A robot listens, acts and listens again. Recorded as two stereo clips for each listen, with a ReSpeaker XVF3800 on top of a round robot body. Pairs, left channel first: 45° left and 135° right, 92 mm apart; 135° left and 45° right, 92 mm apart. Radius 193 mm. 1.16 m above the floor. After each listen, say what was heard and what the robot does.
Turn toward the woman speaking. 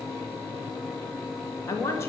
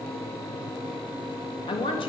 The woman speaking: 110° left. Turn 110° left.
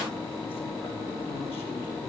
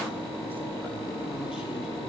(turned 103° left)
Keep listening.
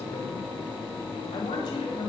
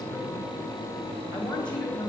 The woman speaking is now 60° left. Turn 60° left.
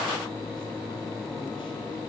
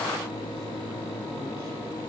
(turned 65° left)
Keep listening.
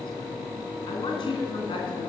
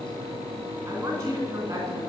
Found it: a woman speaking, straight ahead, 2 to 4 m away.